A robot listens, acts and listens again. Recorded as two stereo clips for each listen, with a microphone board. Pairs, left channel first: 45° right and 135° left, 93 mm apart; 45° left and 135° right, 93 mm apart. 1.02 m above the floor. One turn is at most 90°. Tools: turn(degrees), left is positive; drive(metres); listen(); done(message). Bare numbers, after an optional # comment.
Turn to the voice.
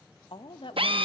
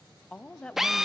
# The woman speaking: 35° right.
turn(-35)
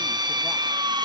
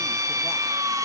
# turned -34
listen()
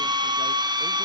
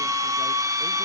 listen()
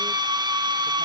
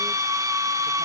done("Facing where the woman speaking came from. I can't hear it now.")